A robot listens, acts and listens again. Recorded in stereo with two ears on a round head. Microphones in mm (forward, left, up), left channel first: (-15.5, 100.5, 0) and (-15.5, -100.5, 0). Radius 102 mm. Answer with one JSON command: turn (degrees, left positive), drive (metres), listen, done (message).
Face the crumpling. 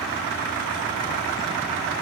{"listen": true}
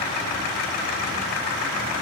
{"listen": true}
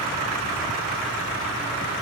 {"done": "I can't make out crumpling."}